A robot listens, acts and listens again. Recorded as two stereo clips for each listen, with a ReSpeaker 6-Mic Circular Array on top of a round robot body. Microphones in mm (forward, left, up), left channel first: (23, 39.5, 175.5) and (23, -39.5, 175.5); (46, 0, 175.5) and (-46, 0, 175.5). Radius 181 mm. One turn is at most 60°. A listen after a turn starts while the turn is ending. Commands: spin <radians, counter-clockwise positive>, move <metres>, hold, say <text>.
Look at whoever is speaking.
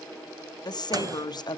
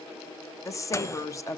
spin 0.96
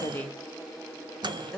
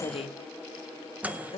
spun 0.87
say Facing the woman speaking, 1 to 2 m away.